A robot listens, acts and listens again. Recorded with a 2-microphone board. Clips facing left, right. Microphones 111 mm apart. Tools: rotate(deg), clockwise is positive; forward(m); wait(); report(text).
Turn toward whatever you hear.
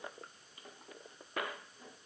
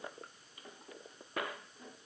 wait()
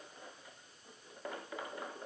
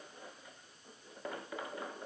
wait()
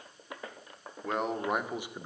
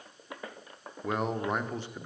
rotate(-20)
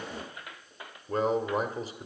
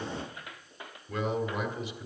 rotate(-35)
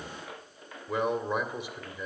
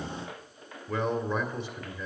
rotate(-10)
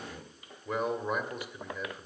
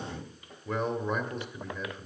report("Found it: a man speaking, straight ahead, 1 to 2 m away.")